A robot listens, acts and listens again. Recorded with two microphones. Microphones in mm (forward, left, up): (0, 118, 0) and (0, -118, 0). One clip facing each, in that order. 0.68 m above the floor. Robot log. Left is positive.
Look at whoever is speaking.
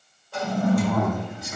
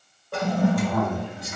note: The man speaking: about 45° left or 135° left.
cmd yaw +45
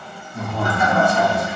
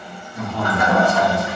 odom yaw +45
note: So it is at 10° left.
cmd yaw +10
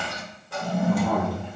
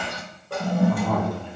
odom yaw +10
end: Found it: a man speaking, straight ahead.